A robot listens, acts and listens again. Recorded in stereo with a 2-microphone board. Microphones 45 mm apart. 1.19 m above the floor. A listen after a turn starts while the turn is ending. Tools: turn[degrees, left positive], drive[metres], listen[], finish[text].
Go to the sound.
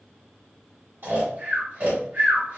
Thought: The snoring: about 70° right or 110° right.
Action: turn[-70]
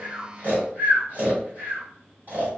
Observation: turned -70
Thought: So it is at 40° right.
Action: turn[-40]
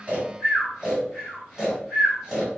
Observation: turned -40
Action: drive[1.0]
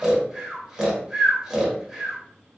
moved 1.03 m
Action: drive[1.0]
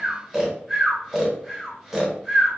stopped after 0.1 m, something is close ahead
Action: finish[Arrived at the snoring, straight ahead.]